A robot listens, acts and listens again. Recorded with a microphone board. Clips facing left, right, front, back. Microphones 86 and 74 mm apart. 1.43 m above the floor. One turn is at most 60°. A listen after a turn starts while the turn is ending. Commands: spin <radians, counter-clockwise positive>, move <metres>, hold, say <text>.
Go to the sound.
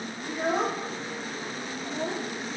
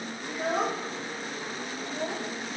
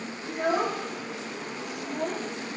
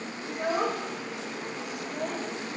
spin 0.61
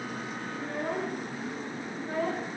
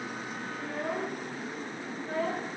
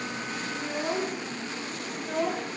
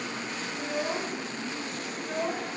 move 1.0
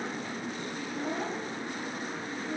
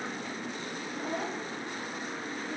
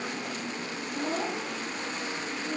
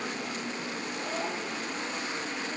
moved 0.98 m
move 1.0
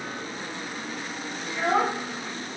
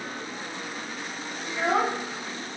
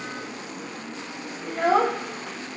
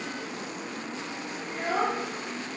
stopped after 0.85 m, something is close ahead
say Arrived at the child speaking, straight ahead.